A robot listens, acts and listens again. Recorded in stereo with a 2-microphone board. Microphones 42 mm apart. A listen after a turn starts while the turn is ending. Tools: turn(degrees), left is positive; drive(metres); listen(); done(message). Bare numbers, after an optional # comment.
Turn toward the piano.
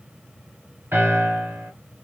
# The piano: about 70° right or 110° right.
turn(-70)
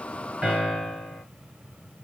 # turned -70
done("Found it: a piano, straight ahead.")